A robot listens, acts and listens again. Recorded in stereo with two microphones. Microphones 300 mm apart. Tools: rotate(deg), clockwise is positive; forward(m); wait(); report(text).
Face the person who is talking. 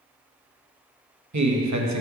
rotate(70)
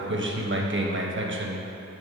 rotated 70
rotate(40)
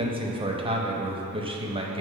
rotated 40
rotate(20)
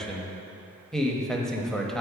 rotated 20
report("Found it: a man speaking, straight ahead.")